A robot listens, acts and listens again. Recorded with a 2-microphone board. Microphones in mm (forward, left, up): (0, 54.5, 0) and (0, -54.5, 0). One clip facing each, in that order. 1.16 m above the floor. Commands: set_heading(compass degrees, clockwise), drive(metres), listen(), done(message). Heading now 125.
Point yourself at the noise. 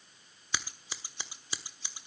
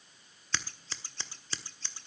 set_heading(95)
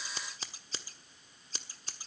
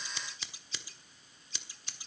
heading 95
set_heading(320)
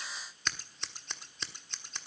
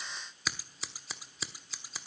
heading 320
done("Facing the scissors.")